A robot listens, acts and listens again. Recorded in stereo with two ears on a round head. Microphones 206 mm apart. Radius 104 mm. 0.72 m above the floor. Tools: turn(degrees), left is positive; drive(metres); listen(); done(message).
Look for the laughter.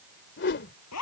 listen()
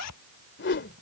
listen()
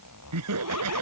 turn(degrees=-90)
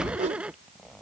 done("Facing the laughter.")